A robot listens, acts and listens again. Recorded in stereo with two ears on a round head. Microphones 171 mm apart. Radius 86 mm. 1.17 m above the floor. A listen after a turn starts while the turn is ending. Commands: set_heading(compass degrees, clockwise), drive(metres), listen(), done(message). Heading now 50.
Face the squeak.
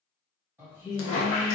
set_heading(320)
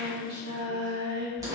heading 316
listen()
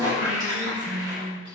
set_heading(336)
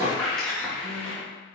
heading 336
done("Found it: a squeak, straight ahead, 1 to 2 m away.")